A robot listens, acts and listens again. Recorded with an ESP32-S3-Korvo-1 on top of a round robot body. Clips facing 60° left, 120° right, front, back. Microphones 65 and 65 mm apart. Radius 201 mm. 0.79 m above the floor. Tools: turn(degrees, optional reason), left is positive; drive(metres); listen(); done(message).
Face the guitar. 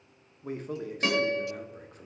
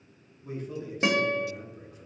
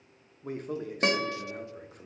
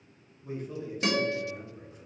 turn(degrees=-50, reason="The guitar: 50° right.")
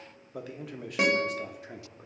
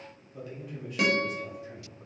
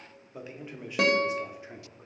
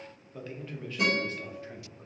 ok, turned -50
done("Found it: a guitar, straight ahead, under 1 m away.")